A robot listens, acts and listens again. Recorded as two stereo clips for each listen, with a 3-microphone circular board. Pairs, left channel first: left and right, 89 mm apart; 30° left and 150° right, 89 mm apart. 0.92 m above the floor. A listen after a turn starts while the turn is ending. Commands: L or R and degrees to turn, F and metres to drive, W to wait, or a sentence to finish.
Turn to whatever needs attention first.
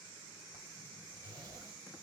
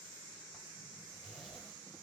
W
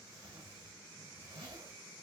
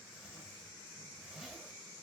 W
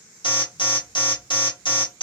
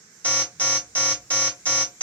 L100
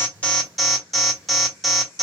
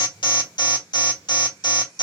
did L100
Found it: an alarm, straight ahead, 1 to 2 m away.